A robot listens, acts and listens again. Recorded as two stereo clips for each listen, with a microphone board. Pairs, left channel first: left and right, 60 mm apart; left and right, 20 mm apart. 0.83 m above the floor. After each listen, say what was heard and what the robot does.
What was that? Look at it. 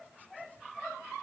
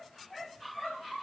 Keep listening.
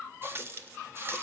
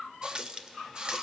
The running tap: about 45° right or 135° right. Turn 45° right.
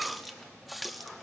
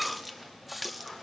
Found it: a running tap, straight ahead, under 1 m away.